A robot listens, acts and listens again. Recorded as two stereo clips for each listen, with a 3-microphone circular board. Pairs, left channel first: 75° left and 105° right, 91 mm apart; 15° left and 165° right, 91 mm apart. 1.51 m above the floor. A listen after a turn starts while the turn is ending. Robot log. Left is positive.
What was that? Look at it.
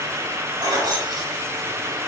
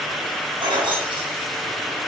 note: The keys jangling: 145° right.
cmd yaw -145
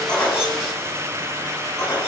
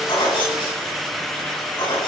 note: The keys jangling is now 15° left.
cmd yaw +15
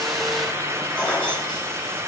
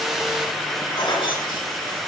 end: Facing the keys jangling, over 4 m away.